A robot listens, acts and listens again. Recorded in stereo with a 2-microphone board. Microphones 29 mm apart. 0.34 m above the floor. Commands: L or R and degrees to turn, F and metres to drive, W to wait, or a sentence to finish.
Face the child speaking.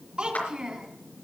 R35
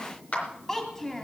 L20
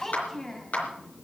L20
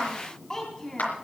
L25
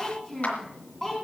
L10
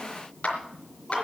W
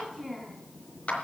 Facing the child speaking, 2 to 4 m away.